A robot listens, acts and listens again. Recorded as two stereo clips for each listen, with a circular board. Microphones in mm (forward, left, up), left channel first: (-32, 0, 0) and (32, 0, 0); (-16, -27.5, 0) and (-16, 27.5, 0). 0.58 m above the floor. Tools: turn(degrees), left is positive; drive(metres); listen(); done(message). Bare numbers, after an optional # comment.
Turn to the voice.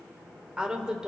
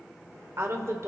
# The woman speaking: 75° left.
turn(75)
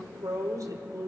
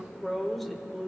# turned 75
done("Found it: a woman speaking, straight ahead, 1 to 2 m away.")